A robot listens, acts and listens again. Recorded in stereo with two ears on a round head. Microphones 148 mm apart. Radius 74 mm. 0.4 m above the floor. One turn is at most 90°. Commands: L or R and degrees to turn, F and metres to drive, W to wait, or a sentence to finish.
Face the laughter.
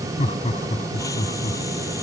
L40
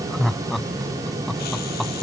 Found it: laughter, straight ahead.